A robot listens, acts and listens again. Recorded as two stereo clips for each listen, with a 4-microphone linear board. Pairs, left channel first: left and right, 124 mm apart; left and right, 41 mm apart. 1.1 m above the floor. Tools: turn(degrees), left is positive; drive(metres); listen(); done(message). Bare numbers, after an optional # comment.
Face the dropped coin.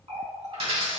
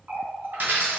# The dropped coin: about 60° right or 120° right.
turn(-60)
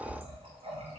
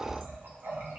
listen()
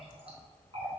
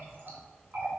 done("I heard a dropped coin, but can't make it out now. It was about straight ahead or 60° right.")